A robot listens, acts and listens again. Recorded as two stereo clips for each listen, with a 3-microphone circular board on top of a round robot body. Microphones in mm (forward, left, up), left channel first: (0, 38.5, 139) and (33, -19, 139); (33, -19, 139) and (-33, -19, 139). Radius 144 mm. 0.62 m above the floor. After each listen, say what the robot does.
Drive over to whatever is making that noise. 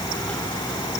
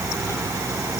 Keep listening.
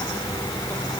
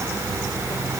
Keep listening.
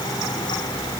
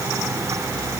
I can't make out anything to turn to.